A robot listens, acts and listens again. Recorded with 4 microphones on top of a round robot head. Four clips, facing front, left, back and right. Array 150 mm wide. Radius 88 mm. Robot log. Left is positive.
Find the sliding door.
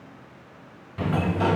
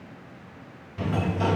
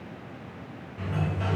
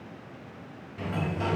note: The sliding door: 20° left.
cmd yaw +20
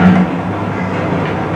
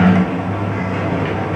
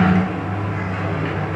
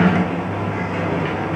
end: Found it: a sliding door, straight ahead.